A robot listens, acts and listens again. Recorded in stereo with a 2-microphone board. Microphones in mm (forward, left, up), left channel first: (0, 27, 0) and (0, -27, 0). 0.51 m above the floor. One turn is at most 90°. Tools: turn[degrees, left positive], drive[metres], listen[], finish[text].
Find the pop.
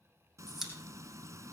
Action: turn[-30]
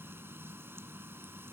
Action: listen[]
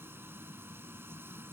Action: finish[I heard a pop, but can't make it out now. It was about 25° left or 145° right.]